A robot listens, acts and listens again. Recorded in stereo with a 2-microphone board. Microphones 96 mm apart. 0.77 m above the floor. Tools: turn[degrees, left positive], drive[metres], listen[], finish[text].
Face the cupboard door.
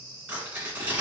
Action: listen[]
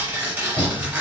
Action: turn[30]
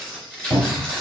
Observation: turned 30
Thought: So it is at 25° right.
Action: turn[-25]
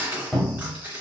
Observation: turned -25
Thought: The cupboard door is now 10° left.
Action: turn[10]
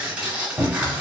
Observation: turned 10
Action: finish[Facing the cupboard door, 1 to 2 m away.]